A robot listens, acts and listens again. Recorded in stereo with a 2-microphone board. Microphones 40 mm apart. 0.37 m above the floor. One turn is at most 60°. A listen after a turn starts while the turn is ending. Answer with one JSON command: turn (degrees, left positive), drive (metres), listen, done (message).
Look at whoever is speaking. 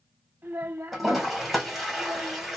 {"turn": -55}
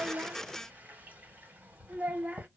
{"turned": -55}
{"turn": -45}
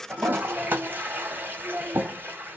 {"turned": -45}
{"turn": -20}
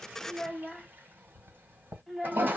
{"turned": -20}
{"done": "Facing the child speaking."}